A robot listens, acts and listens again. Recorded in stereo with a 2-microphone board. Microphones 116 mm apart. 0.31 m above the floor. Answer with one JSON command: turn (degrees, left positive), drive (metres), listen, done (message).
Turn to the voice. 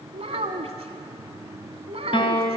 {"turn": -60}
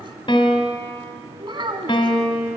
{"turn": -50}
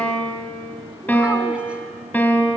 {"listen": true}
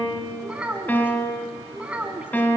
{"turn": -10}
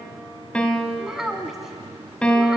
{"done": "Facing the child speaking."}